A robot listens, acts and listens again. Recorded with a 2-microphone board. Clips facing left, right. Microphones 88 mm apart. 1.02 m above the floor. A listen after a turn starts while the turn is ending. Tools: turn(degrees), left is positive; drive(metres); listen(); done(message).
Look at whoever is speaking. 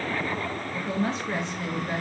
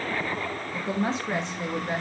turn(degrees=-20)
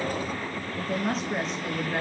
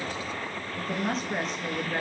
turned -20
done("Facing the woman speaking, under 1 m away.")